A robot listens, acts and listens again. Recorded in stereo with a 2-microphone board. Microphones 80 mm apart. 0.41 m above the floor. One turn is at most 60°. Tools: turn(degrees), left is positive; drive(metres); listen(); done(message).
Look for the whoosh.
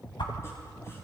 turn(degrees=60)
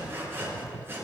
listen()
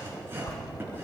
turn(degrees=45)
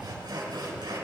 listen()
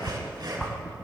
turn(degrees=15)
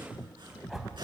done("Facing the whoosh.")